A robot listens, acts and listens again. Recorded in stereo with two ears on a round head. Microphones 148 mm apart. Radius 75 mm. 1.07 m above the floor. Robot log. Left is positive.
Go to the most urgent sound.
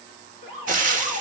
note: The alarm: about 45° right or 135° right.
cmd yaw -45
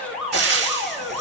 cmd fwd 1.0
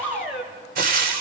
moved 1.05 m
cmd fwd 1.0
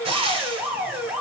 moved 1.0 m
note: The alarm is now 10° right.
cmd yaw -10
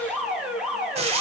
cmd fwd 1.0
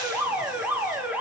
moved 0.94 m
note: The alarm is now 15° right.
cmd yaw -15
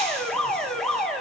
cmd fwd 1.0
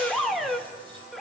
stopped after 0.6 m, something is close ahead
end: Arrived at the alarm, straight ahead.